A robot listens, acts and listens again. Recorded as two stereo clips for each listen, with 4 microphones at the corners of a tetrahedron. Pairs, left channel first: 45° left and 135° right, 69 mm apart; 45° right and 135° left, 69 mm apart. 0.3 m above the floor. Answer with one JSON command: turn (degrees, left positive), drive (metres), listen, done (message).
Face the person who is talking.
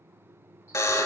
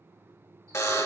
{"listen": true}
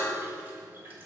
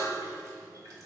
{"listen": true}
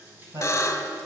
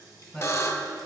{"turn": -140}
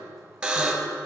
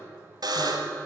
{"listen": true}
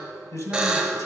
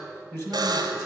{"done": "Found it: a man speaking, straight ahead, 1 to 2 m away."}